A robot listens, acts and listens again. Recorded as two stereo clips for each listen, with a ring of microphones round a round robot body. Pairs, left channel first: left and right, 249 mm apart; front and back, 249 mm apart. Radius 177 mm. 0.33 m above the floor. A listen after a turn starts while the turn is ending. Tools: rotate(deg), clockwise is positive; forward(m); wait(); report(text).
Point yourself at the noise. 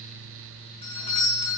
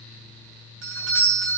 rotate(-160)
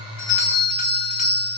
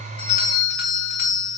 rotate(-40)
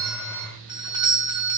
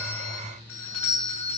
rotate(20)
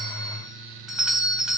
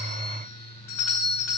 report("Facing the doorbell, 2 to 4 m away.")